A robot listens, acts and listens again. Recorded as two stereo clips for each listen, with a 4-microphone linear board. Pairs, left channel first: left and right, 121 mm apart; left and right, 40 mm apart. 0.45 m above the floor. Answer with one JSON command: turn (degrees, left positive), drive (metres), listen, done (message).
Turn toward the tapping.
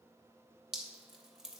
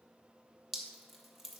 {"listen": true}
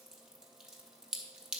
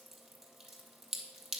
{"listen": true}
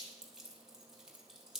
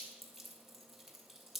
{"done": "I can't make out tapping, only dripping."}